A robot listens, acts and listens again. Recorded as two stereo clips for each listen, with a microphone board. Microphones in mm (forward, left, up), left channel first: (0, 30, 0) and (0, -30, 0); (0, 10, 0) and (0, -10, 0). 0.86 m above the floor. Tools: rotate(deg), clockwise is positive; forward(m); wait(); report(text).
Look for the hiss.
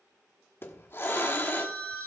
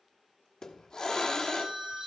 rotate(-35)
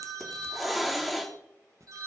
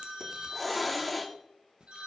report("Found it: a hiss, straight ahead, 1 to 2 m away.")